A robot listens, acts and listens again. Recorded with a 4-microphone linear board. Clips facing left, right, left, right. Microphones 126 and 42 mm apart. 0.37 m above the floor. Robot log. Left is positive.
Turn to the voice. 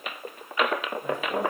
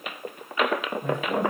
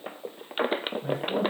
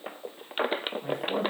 note: The man speaking: about 65° right or 115° right.
cmd yaw -65
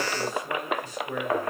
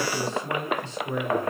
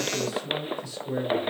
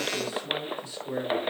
note: So it is at 30° right.
cmd yaw -30
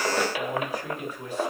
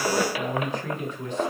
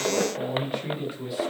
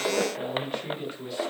note: The man speaking is now 10° left.
cmd yaw +10
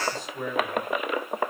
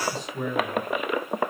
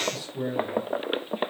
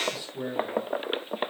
end: Found it: a man speaking, straight ahead.